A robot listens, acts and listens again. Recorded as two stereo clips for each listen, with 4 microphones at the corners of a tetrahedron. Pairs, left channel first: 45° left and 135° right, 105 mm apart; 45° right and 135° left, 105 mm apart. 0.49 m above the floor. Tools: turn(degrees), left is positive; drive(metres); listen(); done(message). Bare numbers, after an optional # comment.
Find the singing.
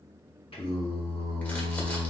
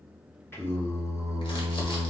done("Found it: singing, straight ahead.")